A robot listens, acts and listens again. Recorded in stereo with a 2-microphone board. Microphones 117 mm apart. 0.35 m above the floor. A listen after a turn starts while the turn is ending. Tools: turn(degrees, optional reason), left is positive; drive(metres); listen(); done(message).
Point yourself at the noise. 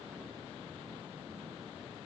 listen()
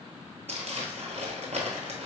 turn(degrees=-70, reason="The crumpling: about 70° right or 110° right.")
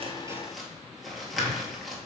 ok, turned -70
done("Facing the crumpling.")